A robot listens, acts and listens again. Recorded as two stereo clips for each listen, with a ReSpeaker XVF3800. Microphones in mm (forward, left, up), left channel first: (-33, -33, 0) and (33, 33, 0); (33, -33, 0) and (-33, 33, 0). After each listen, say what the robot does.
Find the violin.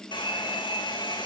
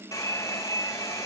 Keep listening.
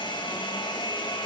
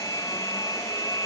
Keep listening.
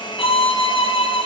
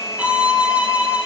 Turn 150° right.
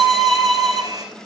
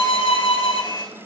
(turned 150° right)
Turn 50° right.
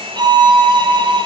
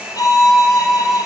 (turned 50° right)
Found it: a violin, straight ahead, 1 to 2 m away.